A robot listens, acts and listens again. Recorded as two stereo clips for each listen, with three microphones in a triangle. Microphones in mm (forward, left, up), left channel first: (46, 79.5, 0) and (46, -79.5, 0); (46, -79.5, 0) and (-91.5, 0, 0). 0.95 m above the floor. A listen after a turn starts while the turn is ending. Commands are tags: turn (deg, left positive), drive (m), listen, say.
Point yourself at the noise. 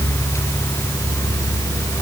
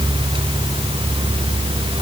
<listen/>
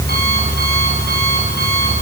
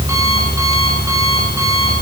<listen/>
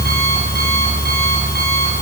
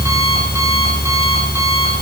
<say>I can't make out anything.</say>